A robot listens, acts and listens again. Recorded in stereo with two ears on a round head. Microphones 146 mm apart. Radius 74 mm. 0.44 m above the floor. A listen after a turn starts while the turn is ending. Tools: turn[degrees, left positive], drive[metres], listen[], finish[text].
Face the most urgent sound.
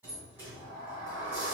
Action: listen[]
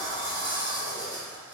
Action: listen[]
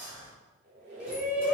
Action: turn[-30]
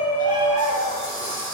Thought: So it is at 140° right.
Action: turn[-140]
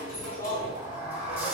Thought: The shout is now 35° left.
Action: turn[35]
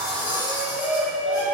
Action: finish[Facing the shout, 1 to 2 m away.]